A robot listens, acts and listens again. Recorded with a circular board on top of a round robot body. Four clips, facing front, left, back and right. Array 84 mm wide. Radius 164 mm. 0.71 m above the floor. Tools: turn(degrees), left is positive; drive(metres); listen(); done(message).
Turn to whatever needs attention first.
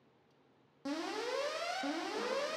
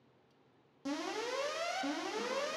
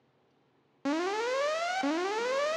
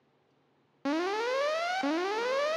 turn(degrees=-130)
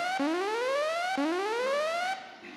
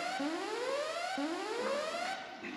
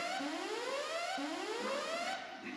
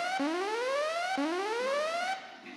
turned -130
turn(degrees=-25)
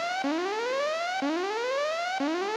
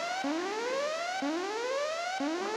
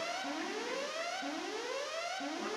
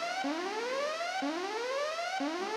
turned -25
done("Found it: an alarm, straight ahead.")